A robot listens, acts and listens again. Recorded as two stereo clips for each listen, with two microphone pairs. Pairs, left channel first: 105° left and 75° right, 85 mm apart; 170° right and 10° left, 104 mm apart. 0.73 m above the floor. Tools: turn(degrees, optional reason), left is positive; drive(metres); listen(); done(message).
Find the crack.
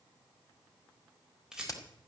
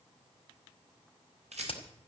turn(degrees=155, reason="The crack: 155° left.")
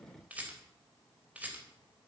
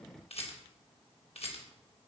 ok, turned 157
done("I heard a crack from this way, but can't make it out now.")